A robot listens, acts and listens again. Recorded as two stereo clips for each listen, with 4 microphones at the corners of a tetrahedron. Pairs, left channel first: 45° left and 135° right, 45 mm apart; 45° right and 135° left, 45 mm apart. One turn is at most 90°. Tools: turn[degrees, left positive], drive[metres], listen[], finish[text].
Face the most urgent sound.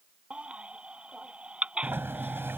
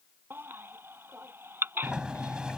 Thought: The baby crying: 165° left.
Action: turn[90]
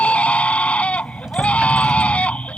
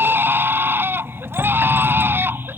Thought: The baby crying is now 105° left.
Action: turn[90]
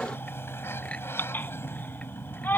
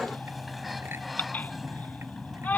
Action: finish[Found it: a baby crying, straight ahead.]